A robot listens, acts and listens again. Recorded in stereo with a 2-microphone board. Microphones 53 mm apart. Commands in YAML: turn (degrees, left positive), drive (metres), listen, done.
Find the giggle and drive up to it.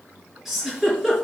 turn: -30
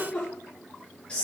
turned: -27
turn: 25
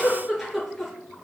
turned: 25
drive: 1.0
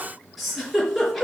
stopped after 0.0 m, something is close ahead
done: "Blocked. The giggle is further on, straight ahead."